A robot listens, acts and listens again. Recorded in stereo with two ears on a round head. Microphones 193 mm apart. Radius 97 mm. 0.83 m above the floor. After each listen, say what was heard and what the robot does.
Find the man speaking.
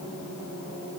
Keep listening.
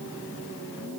Keep listening.
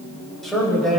Turn 30° left.
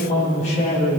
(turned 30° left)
So it is at 145° left. Turn 145° left.
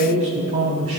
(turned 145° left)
The man speaking is now 35° right. Turn 35° right.
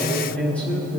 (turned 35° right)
Facing the man speaking, over 4 m away.